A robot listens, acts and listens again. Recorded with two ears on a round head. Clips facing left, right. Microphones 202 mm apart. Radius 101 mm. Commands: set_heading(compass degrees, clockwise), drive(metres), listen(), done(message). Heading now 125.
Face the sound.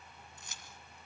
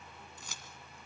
set_heading(190)
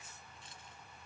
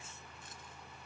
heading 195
listen()
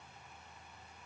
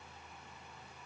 listen()
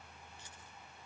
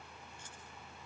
done("I heard keys jangling, but can't make it out now. It was about 5° left or 45° right.")